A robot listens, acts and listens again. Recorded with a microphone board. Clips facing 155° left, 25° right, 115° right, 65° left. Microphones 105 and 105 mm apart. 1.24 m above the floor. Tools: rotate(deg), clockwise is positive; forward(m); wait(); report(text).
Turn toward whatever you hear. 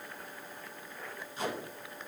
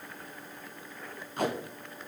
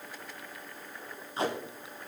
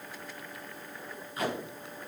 rotate(50)
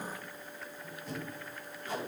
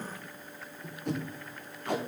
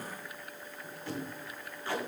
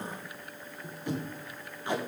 report("Found it: tape being pulled, straight ahead, 1 to 2 m away.")